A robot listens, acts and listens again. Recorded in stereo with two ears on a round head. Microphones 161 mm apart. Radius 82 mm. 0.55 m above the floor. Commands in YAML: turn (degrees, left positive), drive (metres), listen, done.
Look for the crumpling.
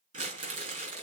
turn: -45
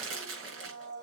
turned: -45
turn: -90
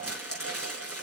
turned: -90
done: "Facing the crumpling."